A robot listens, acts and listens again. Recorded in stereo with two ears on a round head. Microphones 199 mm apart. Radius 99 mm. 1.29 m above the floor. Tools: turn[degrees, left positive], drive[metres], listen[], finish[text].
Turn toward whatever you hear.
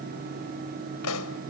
Action: turn[90]
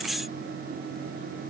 Action: finish[Facing where the pop came from. I can't hear it now.]